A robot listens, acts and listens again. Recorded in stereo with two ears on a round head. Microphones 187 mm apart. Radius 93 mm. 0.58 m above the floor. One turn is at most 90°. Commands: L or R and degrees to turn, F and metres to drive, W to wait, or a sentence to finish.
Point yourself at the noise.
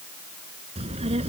R30
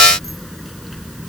Found it: a child speaking, straight ahead.